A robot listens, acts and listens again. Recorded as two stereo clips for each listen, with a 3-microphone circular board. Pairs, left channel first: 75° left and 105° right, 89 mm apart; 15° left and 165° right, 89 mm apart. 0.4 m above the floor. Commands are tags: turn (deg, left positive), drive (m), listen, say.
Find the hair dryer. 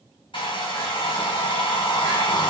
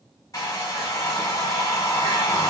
<turn deg="65"/>
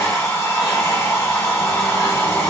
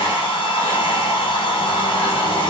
<turn deg="15"/>
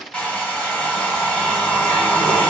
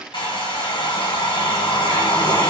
<say>Facing the hair dryer, 1 to 2 m away.</say>